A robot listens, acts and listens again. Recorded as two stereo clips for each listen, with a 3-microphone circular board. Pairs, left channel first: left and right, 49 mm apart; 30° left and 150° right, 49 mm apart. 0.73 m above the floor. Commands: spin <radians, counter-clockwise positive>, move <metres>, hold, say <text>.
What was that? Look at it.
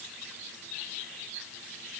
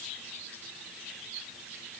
hold
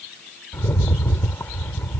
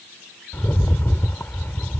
spin 1.05
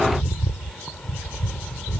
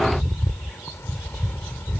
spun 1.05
spin 0.26
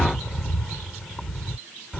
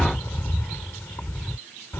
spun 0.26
say Facing the rattle.